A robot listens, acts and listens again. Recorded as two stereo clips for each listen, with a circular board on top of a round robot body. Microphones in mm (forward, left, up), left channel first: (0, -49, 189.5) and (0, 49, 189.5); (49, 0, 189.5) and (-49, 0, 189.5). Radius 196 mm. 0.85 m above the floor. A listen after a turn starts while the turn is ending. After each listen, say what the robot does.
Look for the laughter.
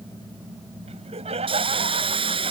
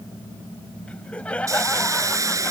Turn 80° left.
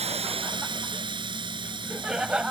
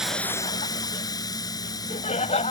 Turn 10° left.
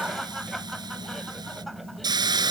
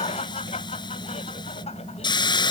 Keep listening.
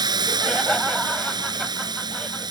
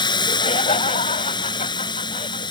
Keep listening.
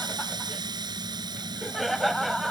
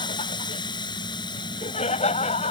Facing the laughter.